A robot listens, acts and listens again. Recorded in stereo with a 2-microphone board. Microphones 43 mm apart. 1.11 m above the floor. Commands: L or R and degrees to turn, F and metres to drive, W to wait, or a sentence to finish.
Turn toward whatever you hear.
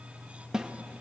R20
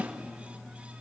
R140
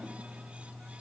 W
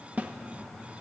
R40
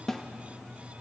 L10
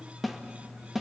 Facing the snare drum, 1 to 2 m away.